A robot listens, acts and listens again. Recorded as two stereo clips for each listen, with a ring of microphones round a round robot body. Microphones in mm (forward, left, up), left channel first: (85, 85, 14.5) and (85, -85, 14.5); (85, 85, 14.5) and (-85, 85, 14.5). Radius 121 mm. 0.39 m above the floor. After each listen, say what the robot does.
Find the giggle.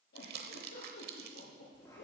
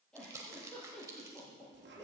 Turn 85° left.
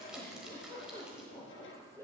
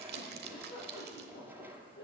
Turn 15° left.
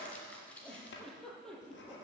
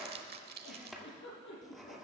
Facing the giggle.